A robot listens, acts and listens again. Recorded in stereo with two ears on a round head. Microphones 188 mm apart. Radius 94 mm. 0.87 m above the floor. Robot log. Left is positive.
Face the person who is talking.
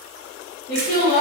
note: The woman speaking: about 40° left or 140° left.
cmd yaw +40
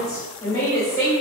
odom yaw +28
note: So it is at 15° left.
cmd yaw +15
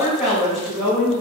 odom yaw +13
end: Facing the woman speaking, 1 to 2 m away.